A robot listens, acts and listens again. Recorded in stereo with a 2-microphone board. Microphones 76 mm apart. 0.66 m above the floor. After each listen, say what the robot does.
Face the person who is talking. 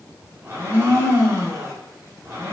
Keep listening.
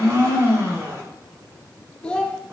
Turn 30° left.
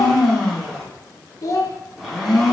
Turn 135° left.
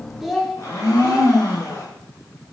Facing the child speaking, under 1 m away.